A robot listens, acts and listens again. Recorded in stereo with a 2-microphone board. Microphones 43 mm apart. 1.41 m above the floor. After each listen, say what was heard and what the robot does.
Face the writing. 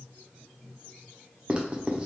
The writing: about 25° right or 155° right. Turn 25° right.
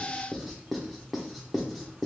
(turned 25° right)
Found it: writing, straight ahead, under 1 m away.